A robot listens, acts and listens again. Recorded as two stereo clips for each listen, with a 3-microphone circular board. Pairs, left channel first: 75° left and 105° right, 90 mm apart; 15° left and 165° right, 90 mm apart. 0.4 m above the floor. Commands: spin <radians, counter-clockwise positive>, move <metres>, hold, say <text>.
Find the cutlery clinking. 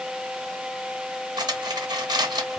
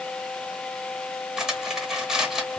spin -1.40
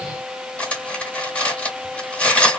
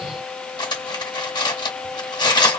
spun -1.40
say Found it: cutlery clinking, straight ahead.